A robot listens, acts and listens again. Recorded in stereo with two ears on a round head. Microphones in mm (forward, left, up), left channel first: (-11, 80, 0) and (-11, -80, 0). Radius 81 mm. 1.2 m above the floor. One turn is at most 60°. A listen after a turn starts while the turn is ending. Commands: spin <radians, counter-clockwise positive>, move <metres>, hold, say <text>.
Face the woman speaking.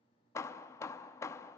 hold
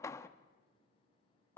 hold
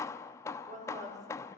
spin -0.70
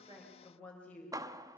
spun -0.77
spin 0.17
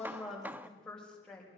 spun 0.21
say Facing the woman speaking, over 4 m away.